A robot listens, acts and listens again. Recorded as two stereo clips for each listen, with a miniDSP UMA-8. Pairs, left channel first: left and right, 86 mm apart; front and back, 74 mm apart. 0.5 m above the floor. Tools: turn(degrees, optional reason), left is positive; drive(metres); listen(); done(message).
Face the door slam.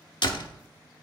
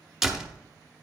turn(degrees=100, reason="The door slam: 100° left.")
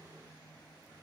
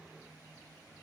done("Facing where the door slam came from. I can't hear it now.")